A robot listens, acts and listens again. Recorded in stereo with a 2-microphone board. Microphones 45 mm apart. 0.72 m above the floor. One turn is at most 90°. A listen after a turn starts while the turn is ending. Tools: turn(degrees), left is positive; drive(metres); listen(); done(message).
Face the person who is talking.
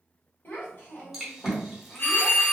turn(degrees=50)
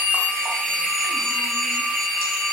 listen()
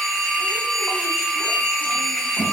listen()
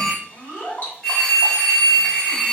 turn(degrees=80)
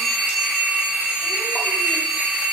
listen()
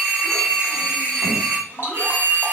listen()
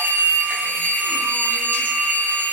done("I heard a child speaking from this way, but can't make it out now.")